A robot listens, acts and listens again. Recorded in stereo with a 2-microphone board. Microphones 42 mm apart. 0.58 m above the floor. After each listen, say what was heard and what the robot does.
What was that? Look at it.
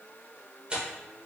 The tearing paper: about 25° right or 155° right. Turn 25° right.
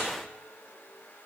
Keep listening.
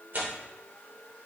So it is at 130° right. Turn 130° right.
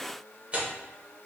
The tearing paper is now 35° right. Turn 35° right.
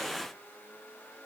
Keep listening.
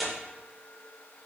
Found it: tearing paper, straight ahead, 1 to 2 m away.